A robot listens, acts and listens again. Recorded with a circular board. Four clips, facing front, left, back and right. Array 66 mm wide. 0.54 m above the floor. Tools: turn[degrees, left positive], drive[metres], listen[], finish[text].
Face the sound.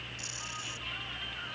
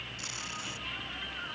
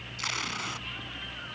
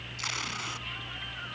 Thought: The tape being pulled: 150° right.
Action: turn[-150]
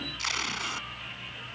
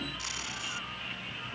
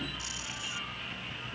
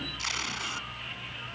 Thought: The tape being pulled is now 30° right.
Action: turn[-30]
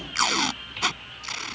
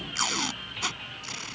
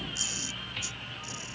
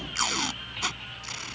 Action: finish[Facing the tape being pulled.]